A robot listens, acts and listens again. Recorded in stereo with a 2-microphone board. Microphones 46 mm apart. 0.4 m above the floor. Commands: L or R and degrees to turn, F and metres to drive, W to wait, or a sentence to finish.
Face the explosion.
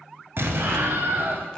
R60
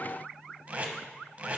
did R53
W
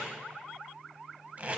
I heard an explosion, but can't make it out now. It was about 5° right or 70° right.